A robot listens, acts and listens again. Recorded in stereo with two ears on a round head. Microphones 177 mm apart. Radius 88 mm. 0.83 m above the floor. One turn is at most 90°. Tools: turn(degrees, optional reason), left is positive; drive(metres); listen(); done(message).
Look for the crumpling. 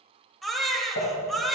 turn(degrees=90)
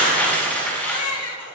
turn(degrees=10, reason="So it is at 10° left.")
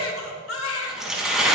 done("Found it: crumpling, straight ahead, over 4 m away.")